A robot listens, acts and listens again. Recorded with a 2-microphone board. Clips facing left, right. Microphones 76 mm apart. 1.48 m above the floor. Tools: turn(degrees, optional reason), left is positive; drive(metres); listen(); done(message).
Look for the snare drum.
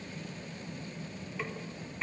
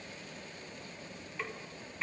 turn(degrees=30)
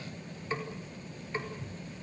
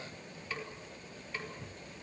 turn(degrees=150, reason="So it is at 150° left.")
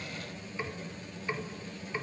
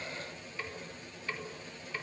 turn(degrees=15, reason="The snare drum is now 15° left.")
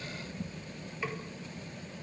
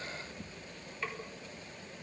done("Facing the snare drum, 2 to 4 m away.")